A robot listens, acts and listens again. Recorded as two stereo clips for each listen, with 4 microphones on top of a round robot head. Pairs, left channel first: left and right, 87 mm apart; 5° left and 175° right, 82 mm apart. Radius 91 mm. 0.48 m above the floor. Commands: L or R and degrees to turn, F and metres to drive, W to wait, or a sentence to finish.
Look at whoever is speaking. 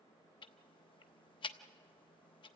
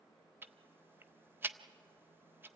W
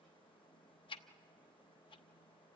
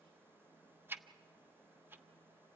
W
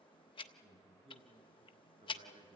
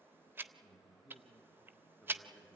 R90
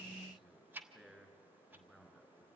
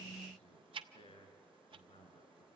R10
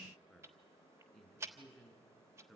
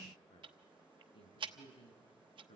Facing the man speaking.